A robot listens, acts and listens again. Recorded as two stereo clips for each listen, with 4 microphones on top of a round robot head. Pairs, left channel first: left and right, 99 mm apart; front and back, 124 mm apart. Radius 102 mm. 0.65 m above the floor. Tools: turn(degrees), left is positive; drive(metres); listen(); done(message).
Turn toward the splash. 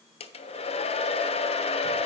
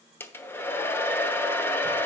listen()
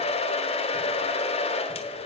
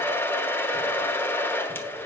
listen()
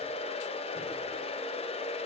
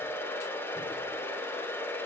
done("I can't make out a splash, only a hair dryer.")